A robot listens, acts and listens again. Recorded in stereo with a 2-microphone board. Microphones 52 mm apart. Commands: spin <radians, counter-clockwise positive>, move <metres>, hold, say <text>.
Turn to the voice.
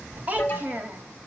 spin -0.61
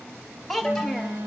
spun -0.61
say Facing the child speaking.